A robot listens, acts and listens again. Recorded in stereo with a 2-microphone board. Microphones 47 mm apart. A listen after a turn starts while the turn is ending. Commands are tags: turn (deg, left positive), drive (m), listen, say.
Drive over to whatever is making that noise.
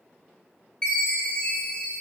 <turn deg="20"/>
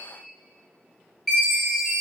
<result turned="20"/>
<drive m="1.0"/>
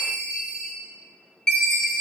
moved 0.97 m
<turn deg="10"/>
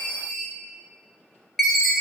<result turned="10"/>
<drive m="1.0"/>
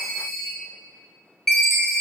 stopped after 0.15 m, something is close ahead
<say>Arrived at the chime, straight ahead.</say>